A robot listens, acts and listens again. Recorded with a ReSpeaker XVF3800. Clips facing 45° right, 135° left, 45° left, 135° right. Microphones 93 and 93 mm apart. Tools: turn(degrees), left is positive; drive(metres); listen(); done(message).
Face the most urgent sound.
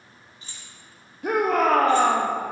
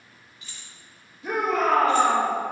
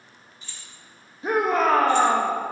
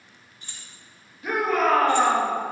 turn(degrees=-15)
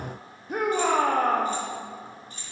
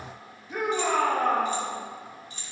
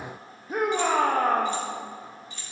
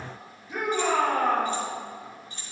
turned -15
done("Found it: a shout, straight ahead, under 1 m away.")